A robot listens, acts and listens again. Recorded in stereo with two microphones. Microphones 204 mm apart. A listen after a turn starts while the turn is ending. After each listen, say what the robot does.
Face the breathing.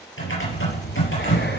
Turn 60° left.
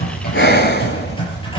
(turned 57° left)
Turn 60° left.
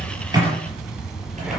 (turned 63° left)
Facing the breathing, 1 to 2 m away.